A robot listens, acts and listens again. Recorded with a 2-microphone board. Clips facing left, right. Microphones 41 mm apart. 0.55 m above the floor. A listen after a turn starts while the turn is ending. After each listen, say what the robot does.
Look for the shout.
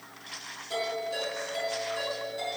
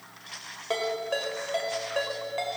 Keep listening.
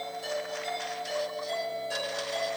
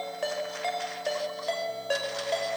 Keep listening.
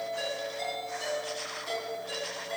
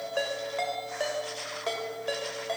I can't make out a shout to turn to.